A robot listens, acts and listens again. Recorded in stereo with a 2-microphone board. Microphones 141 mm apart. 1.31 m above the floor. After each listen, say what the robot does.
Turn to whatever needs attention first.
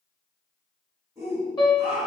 Turn 30° right.
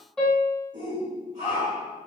Turn 120° right.
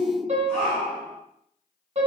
Found it: a shout, straight ahead, 1 to 2 m away.